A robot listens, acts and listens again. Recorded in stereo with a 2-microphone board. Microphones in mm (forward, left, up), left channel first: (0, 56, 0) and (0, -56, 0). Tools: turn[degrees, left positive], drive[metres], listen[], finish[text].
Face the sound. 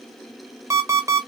Thought: The alarm clock: about 25° right or 155° right.
Action: turn[-25]
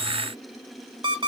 Thought: So it is at 130° right.
Action: turn[-130]
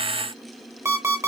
Thought: The alarm clock is now 25° right.
Action: turn[-25]
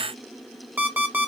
Thought: The alarm clock is now 15° right.
Action: turn[-15]
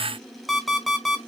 Action: finish[Found it: an alarm clock, straight ahead.]